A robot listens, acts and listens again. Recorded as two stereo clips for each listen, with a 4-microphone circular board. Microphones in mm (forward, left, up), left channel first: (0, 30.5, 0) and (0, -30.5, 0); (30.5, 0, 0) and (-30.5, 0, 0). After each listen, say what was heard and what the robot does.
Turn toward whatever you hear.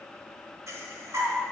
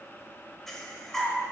The breathing: 80° right. Turn 80° right.
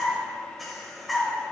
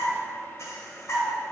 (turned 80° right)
Found it: breathing, straight ahead, 1 to 2 m away.